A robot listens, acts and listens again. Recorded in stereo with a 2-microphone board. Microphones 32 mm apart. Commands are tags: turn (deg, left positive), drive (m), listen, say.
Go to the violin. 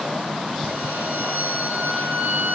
<turn deg="-90"/>
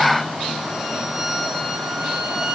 <turn deg="-15"/>
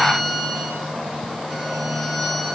<drive m="1.0"/>
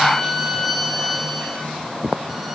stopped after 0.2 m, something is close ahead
<say>Blocked. The violin is further on, straight ahead.</say>